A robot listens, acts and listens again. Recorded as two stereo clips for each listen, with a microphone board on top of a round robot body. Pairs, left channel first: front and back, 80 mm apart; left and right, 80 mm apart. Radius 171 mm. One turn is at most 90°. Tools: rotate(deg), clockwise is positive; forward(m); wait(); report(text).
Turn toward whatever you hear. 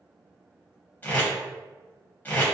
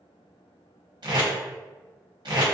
rotate(65)
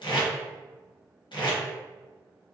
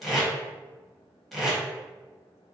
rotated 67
report("Facing the tape being pulled.")